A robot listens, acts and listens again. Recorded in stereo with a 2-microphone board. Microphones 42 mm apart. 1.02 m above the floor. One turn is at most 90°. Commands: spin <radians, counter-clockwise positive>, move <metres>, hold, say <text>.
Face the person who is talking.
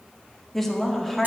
spin 0.52
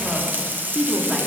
spin -0.44
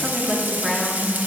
say Facing the woman speaking, 1 to 2 m away.